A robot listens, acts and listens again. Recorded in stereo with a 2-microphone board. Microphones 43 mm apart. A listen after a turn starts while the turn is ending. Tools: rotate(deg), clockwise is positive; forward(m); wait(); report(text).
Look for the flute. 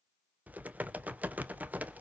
wait()
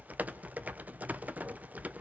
wait()
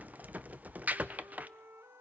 rotate(90)
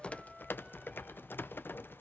wait()
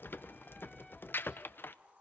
wait()
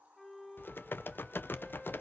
report("Facing the flute, 1 to 2 m away.")